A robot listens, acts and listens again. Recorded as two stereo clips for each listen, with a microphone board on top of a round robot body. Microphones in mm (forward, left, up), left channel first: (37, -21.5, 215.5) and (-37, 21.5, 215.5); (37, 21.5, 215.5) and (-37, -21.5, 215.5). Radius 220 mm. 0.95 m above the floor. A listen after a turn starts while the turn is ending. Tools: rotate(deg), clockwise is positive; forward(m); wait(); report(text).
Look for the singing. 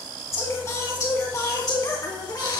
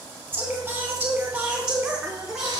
rotate(65)
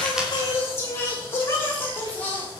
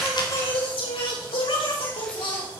rotate(-40)
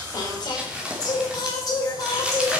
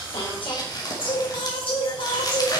rotate(-15)
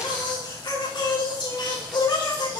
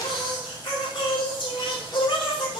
report("Facing the singing, over 4 m away.")